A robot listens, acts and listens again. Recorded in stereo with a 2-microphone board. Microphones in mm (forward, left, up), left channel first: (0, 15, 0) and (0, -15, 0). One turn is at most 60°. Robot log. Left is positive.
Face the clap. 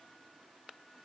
cmd idle
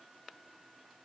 cmd idle
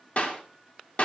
note: The clap: about 50° left or 130° left.
cmd yaw +50
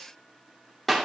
end: Facing the clap, 2 to 4 m away.